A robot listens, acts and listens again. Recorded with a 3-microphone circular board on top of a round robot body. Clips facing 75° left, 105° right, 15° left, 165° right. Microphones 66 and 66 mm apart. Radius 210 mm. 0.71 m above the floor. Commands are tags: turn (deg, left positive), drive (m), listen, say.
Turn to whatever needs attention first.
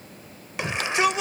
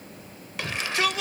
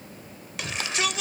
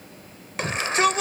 <turn deg="145"/>
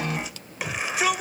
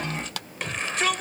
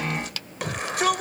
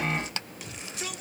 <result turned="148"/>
<say>Facing the shout.</say>